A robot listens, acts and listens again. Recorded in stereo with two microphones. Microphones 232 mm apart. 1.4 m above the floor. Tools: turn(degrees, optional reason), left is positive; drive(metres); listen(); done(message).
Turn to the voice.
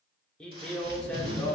turn(degrees=30)
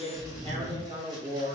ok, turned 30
turn(degrees=-25, reason="So it is at 25° right.")
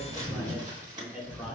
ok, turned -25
done("Facing the man speaking, 1 to 2 m away.")